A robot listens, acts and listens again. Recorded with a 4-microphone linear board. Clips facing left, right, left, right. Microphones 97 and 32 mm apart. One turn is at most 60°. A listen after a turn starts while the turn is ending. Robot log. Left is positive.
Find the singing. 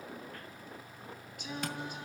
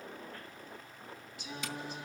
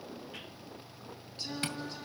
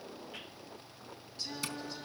note: The singing: about 45° left or 135° left.
cmd yaw +45
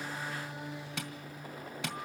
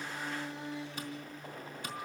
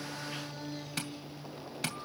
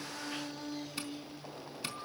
end: Found it: singing, straight ahead.